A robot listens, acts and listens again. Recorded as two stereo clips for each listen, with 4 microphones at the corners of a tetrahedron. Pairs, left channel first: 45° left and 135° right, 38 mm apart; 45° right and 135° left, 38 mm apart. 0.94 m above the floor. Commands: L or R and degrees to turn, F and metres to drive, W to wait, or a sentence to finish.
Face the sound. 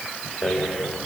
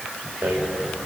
L125
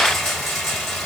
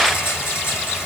R35
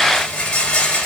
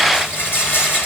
R20
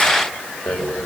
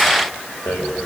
Found it: a rattle, straight ahead.